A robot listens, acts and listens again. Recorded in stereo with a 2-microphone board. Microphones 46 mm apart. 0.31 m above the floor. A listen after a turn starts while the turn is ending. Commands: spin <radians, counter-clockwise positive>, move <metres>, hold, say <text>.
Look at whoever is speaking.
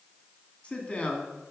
spin 0.44
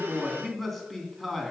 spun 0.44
say Found it: a man speaking, straight ahead.